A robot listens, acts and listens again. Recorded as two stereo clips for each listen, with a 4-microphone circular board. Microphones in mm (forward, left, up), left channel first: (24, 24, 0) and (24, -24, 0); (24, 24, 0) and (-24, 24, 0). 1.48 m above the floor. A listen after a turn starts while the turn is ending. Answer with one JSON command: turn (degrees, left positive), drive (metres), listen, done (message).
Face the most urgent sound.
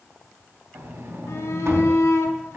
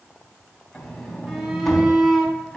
{"turn": 105}
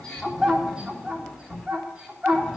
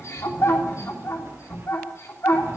{"turn": -10}
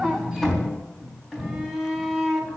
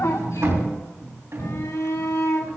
{"done": "Found it: a shout, straight ahead, 2 to 4 m away."}